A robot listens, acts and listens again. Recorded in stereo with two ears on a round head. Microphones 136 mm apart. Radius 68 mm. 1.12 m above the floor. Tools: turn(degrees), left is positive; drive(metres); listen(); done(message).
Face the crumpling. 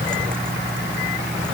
listen()
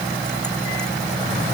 listen()
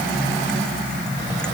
done("I can't make out crumpling.")